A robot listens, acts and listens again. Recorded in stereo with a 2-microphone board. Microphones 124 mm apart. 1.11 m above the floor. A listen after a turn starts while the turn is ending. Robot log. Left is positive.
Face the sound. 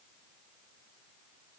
cmd idle
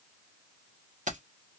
cmd yaw -90
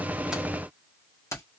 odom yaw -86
note: So it is at 25° left.
cmd yaw +25
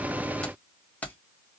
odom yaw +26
note: The keys jangling is now 15° left.
cmd yaw +15
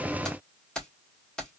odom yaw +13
end: Found it: keys jangling, straight ahead, 2 to 4 m away.